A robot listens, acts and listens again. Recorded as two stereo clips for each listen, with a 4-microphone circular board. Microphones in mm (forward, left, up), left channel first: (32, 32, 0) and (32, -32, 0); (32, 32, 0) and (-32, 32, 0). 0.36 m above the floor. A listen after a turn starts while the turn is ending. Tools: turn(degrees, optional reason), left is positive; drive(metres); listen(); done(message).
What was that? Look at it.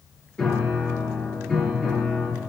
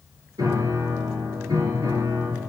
turn(degrees=175, reason="The piano: 175° left.")
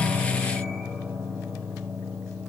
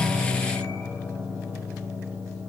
done("Found it: a piano, straight ahead, over 4 m away.")